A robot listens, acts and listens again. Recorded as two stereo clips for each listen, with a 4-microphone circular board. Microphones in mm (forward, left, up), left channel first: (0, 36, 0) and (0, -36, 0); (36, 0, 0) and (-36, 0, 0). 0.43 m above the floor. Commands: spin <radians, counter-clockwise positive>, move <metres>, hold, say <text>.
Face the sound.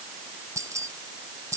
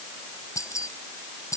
spin -0.79
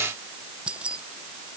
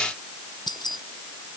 spin -0.26
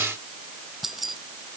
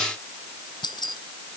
say Found it: keys jangling, straight ahead.